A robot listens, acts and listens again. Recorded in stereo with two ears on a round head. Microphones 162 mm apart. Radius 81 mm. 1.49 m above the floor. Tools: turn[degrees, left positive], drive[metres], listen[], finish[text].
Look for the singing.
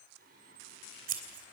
Thought: The singing: about 55° right or 125° right.
Action: turn[-55]
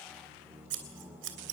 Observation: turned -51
Thought: So it is at 10° right.
Action: turn[-10]
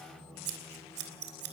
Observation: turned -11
Action: finish[Facing the singing.]